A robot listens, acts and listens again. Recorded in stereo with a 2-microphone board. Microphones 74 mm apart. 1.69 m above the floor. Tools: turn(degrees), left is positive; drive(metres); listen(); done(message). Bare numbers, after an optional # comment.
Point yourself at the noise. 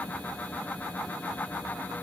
listen()
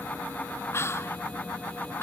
# The whispering: about 35° left or 145° left.
turn(35)
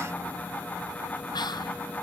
listen()
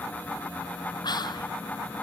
# So it is at 110° left.
turn(110)
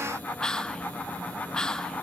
# The whispering is now 10° left.
turn(10)
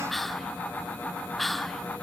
done("Found it: whispering, straight ahead, under 1 m away.")